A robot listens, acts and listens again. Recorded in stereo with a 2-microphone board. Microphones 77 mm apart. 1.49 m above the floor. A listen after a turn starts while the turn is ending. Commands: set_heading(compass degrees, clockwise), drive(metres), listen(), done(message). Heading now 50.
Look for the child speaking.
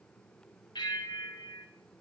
listen()
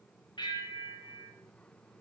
listen()
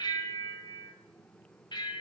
done("I can't make out a child speaking to turn to.")